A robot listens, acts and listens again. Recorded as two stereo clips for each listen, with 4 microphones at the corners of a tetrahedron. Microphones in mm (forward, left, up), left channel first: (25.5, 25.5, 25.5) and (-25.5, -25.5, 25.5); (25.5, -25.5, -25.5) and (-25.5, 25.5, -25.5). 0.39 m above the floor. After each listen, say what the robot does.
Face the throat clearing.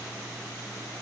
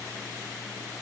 Keep listening.
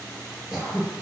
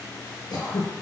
Turn 50° right.
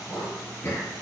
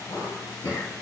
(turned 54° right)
Found it: throat clearing, straight ahead, 2 to 4 m away.